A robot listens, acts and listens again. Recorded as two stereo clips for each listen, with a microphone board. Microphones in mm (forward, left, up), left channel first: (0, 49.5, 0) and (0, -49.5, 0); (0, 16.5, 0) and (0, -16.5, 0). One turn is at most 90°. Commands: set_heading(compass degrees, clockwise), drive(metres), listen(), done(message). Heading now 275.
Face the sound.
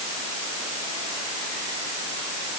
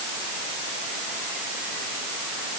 listen()
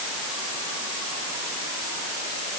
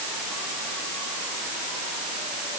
listen()
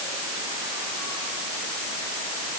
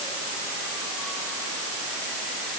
done("I can't make out anything to turn to.")